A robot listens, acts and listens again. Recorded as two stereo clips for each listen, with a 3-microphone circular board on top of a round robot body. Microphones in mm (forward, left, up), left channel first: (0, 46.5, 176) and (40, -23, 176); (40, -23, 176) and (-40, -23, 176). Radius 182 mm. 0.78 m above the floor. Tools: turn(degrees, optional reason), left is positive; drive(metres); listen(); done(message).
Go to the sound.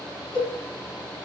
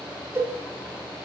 turn(degrees=125, reason="The cowbell: 125° left.")
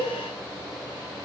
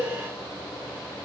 drive(metres=1.0)
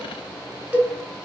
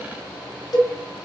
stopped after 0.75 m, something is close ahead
turn(degrees=10, reason="The cowbell is now 10° left.")
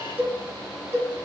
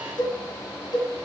done("Arrived at the cowbell, straight ahead.")